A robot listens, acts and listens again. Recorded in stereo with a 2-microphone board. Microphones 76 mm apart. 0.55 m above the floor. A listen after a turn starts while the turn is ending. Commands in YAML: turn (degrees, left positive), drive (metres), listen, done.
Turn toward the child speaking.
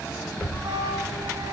turn: 30
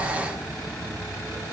listen: true
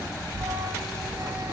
turn: 100
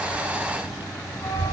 turn: -30
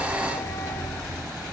turn: -15
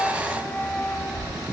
done: "Facing the child speaking."